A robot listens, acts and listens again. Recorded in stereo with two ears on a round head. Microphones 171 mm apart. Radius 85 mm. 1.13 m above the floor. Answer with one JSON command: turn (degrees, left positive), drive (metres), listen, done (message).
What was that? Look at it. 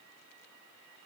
{"listen": true}
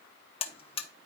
{"turn": 30}
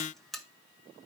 {"done": "Found it: a buzzer, straight ahead, under 1 m away."}